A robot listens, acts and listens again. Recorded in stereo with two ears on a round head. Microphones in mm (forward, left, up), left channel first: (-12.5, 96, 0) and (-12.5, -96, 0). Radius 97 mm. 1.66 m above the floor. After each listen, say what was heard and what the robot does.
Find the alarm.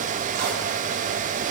Keep listening.
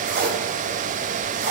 Keep listening.
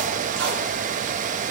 I can't make out an alarm, only tape being pulled.